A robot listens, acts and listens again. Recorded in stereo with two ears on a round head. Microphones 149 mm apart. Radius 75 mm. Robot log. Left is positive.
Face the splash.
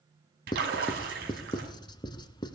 note: The splash: about 60° right or 120° right.
cmd yaw -60
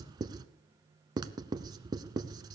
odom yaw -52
cmd idle
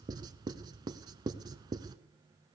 end: I heard a splash, but can't make it out now. It was about 10° right or 65° right.